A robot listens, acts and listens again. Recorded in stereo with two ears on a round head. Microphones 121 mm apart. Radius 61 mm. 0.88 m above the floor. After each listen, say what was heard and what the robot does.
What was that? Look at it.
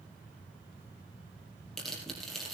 Turn 30° left.
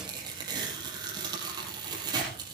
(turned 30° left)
So it is at 30° right. Turn 30° right.
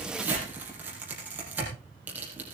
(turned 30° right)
The tearing paper is now 10° right. Turn 10° right.
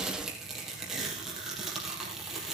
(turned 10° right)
Found it: tearing paper, straight ahead, over 4 m away.